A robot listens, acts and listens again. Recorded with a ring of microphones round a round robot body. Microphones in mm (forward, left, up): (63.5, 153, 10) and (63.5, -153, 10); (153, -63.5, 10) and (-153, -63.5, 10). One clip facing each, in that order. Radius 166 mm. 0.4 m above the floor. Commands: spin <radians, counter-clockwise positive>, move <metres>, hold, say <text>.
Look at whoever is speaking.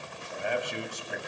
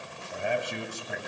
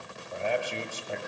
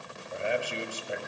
spin -1.92
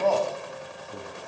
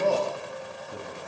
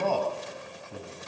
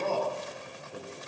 spin -0.52
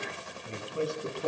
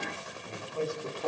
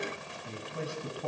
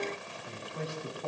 spin 0.26
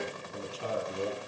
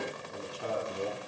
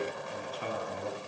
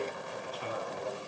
say Found it: a man speaking, straight ahead, over 4 m away.